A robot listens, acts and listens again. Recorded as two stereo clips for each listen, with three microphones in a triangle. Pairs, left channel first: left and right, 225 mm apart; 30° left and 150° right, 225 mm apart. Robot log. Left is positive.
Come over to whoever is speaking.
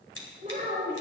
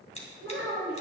note: The child speaking: 145° right.
cmd yaw -145
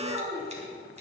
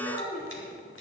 note: The child speaking is now 20° right.
cmd yaw -20
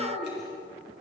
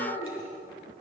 cmd fwd 1.0
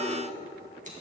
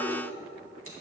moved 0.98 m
cmd idle
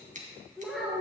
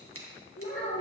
cmd fwd 1.0
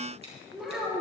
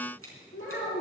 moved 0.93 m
cmd fwd 1.0
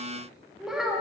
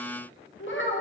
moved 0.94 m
cmd fwd 1.0
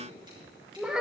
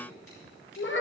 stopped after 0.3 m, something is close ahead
end: I am next to the child speaking.